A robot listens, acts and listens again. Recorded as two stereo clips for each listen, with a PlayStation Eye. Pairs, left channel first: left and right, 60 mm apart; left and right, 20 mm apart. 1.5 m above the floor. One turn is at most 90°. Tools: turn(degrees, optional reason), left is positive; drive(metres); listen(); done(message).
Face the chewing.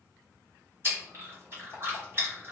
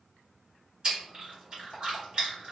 turn(degrees=-40, reason="The chewing: about 40° right or 140° right.")
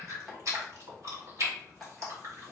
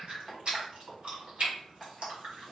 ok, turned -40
turn(degrees=-90, reason="So it is at 95° right.")
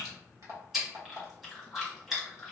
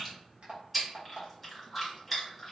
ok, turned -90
done("Found it: chewing, straight ahead, 1 to 2 m away.")